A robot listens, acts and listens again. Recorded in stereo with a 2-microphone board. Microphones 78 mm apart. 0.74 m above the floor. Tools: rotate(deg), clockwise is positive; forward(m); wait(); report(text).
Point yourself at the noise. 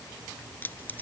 rotate(-20)
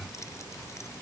wait()
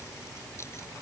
rotate(-35)
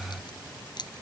rotate(-110)
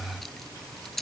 report("Found it: keys jangling, straight ahead.")